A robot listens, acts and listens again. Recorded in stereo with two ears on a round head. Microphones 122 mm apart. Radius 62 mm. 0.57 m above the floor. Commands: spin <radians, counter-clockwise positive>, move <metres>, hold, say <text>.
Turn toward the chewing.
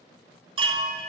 hold
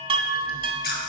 spin 1.57
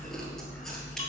say Facing the chewing, 1 to 2 m away.